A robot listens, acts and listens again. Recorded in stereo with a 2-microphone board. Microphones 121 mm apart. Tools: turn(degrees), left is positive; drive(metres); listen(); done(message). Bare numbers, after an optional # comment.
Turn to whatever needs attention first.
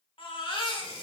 # The baby crying: about 50° left or 130° left.
turn(50)
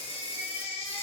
# So it is at 70° left.
turn(70)
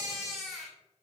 done("Facing the baby crying.")